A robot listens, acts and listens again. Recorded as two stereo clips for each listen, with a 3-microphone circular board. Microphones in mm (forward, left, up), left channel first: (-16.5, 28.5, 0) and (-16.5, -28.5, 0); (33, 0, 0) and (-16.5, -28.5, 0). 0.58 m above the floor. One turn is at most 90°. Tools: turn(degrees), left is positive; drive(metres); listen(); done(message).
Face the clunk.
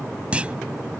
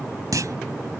turn(degrees=-90)
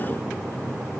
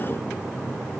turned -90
turn(degrees=-70)
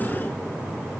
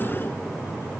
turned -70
done("I heard a clunk from this way, but can't make it out now.")